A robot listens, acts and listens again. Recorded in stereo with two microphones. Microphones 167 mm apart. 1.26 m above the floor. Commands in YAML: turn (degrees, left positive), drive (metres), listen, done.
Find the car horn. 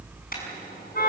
turn: 60
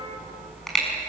done: "Found it: a car horn, straight ahead."